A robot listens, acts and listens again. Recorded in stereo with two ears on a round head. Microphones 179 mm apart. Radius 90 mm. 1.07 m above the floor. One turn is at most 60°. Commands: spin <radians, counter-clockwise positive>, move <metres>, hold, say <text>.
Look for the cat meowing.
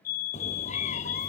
spin 0.61
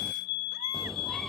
say Found it: a cat meowing, straight ahead.